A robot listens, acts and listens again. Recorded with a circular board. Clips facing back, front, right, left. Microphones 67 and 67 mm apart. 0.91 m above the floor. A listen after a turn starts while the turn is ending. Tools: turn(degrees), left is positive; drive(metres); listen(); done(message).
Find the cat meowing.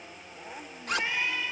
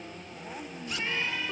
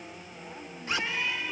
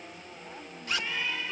turn(degrees=-105)
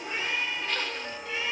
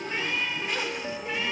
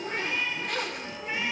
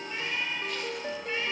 turn(degrees=-20)
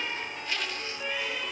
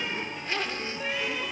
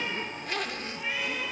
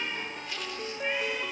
listen()
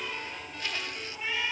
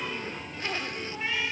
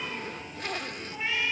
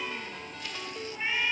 done("Facing the cat meowing.")